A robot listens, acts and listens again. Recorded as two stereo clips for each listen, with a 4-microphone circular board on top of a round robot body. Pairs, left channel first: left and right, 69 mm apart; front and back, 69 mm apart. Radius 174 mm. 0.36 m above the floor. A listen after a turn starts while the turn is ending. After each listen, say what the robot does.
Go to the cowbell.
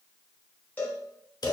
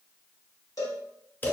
Turn 25° left.
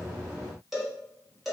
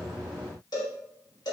Drive 1.0 m forward.
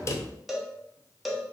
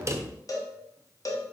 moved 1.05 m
Drive 1.0 m forward.
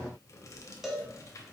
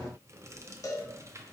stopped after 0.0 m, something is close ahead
Arrived at the cowbell, straight ahead.